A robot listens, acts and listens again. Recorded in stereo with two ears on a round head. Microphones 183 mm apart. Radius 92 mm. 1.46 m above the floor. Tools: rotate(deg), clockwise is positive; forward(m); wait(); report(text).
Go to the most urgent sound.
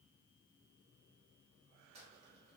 wait()
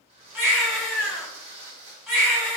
rotate(-30)
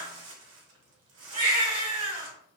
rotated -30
rotate(25)
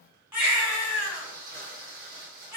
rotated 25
rotate(10)
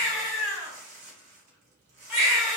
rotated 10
forward(1.0)
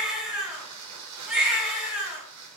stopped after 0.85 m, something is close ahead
report("I am next to the baby crying.")